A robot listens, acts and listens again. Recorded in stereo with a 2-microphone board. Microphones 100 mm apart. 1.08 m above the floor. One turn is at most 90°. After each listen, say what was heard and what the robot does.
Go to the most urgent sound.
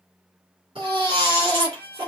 The baby crying: about 65° right or 115° right. Turn 65° right.
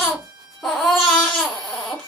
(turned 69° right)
Drive 1.0 m forward.
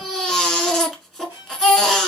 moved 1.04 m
Drive 1.0 m forward.
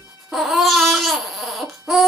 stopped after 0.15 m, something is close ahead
I am next to the baby crying.